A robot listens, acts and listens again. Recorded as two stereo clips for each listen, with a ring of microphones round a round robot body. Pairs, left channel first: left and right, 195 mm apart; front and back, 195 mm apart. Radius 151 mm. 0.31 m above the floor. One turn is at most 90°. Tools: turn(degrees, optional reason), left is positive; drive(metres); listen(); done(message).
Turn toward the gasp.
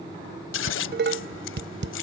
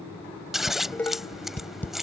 listen()
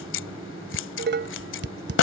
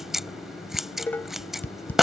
listen()
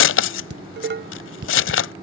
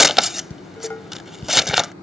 done("I can't make out a gasp to turn to.")